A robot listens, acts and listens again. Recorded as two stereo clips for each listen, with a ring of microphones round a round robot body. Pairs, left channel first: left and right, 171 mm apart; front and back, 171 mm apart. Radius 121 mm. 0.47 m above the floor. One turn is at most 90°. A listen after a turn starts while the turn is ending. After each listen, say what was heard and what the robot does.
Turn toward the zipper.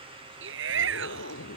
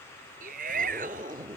The zipper: 110° left. Turn 90° left.
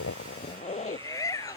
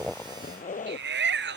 The zipper is now 40° left. Turn 40° left.
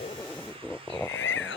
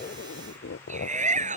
Facing the zipper.